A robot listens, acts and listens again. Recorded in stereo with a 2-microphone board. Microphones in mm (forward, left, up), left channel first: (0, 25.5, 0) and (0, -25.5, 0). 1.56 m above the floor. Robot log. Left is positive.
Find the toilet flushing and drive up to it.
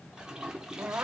cmd yaw -30
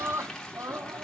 note: So it is at 15° left.
cmd yaw +15
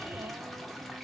cmd idle
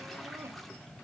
cmd idle
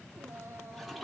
cmd fwd 1.0
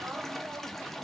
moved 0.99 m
cmd fwd 1.0
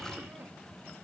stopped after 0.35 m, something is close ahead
cmd idle
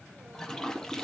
note: The toilet flushing is now 10° left.
cmd yaw +10
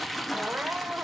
end: Arrived at the toilet flushing, straight ahead.